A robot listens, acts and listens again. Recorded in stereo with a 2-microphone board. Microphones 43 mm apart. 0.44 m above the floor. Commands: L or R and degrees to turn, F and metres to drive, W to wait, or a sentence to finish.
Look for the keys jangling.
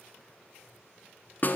W
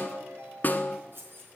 R55
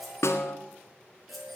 W
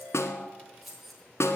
Facing the keys jangling, over 4 m away.